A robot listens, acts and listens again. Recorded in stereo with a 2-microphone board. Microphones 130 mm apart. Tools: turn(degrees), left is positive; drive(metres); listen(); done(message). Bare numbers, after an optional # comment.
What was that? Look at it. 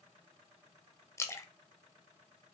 # The splash: about 20° left or 160° left.
turn(20)
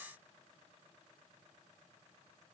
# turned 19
listen()
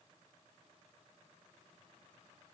done("I heard a splash, but can't make it out now. It was about 5° left or 140° left.")